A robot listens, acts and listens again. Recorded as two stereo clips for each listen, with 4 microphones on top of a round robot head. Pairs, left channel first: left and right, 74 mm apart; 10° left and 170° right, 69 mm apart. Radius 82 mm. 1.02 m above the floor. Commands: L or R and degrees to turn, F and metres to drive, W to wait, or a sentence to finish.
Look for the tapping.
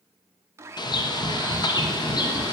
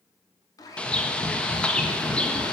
Facing the tapping, 2 to 4 m away.